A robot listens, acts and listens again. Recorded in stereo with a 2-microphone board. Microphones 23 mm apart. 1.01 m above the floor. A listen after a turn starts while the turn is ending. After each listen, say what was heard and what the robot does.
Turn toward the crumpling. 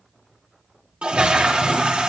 Keep listening.
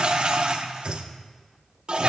Keep listening.
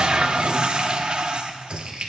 The crumpling: about 50° right or 130° right. Turn 50° right.
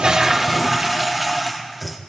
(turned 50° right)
Keep listening.
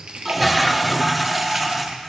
So it is at 80° right. Turn 80° right.
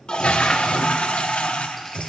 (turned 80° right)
Keep listening.
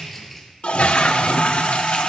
The crumpling is now 10° left. Turn 10° left.
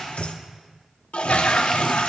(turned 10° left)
Keep listening.
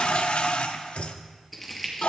Facing the crumpling.